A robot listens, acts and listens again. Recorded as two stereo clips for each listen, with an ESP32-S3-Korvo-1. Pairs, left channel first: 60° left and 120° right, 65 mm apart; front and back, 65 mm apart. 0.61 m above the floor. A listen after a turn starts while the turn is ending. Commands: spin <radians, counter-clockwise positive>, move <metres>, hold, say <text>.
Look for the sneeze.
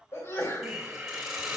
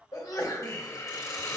spin 0.26
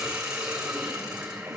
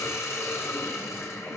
say Facing where the sneeze came from. I can't hear it now.